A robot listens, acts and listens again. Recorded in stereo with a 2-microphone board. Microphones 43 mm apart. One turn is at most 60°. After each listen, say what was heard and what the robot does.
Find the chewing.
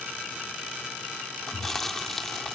Turn 30° left.
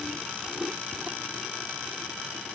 So it is at 20° right. Turn 20° right.
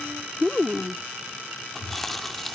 The chewing is now 10° left. Turn 10° left.
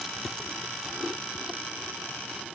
Found it: chewing, straight ahead.